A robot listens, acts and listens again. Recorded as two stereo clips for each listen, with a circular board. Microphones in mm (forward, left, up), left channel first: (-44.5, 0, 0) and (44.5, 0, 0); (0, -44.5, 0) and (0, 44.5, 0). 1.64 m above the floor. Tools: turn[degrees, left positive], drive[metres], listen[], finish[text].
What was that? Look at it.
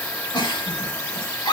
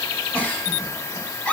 Thought: The giggle: 160° right.
Action: turn[-160]
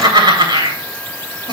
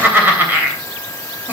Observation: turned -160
Thought: The giggle is now 25° left.
Action: turn[25]
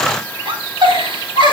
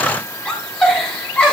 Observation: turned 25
Thought: The giggle is now 10° right.
Action: turn[-10]
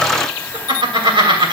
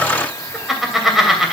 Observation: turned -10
Action: finish[Found it: a giggle, straight ahead.]